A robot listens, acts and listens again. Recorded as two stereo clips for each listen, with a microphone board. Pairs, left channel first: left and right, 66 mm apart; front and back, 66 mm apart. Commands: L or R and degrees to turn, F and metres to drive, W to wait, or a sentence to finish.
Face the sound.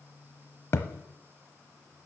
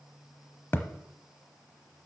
L50
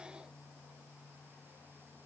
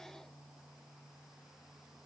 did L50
Facing where the thud came from. I can't hear it now.